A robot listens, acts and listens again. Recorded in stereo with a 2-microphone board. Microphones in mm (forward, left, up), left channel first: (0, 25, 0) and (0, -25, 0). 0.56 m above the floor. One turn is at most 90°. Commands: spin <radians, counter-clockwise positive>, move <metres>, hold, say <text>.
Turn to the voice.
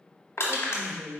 spin 0.52
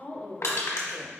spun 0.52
spin 1.57
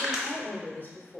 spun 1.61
spin 0.96
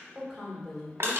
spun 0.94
say Facing the woman speaking, 1 to 2 m away.